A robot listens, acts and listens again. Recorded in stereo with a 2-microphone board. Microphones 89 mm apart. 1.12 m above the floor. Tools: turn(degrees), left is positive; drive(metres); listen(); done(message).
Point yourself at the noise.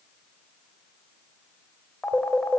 turn(degrees=30)
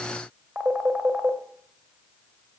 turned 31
turn(degrees=-20)
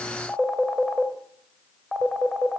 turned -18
done("Facing the phone ringing.")